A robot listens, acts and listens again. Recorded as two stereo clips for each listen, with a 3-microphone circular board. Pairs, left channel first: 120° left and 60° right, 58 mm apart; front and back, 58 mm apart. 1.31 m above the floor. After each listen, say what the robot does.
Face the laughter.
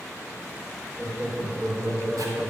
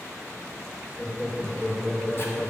Turn 60° right.
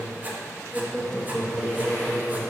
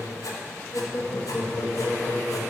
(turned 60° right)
Turn 40° left.
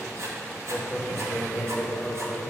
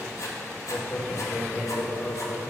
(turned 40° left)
Turn 40° left.
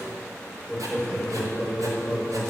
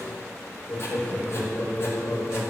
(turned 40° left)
Turn 20° left.
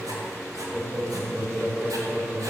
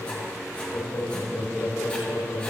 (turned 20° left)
Facing the laughter.